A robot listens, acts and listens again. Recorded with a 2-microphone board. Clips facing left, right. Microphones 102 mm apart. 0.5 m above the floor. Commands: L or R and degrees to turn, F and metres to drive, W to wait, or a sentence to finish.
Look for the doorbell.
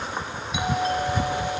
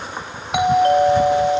R65
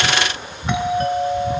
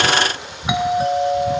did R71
R10
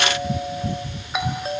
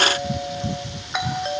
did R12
Facing the doorbell.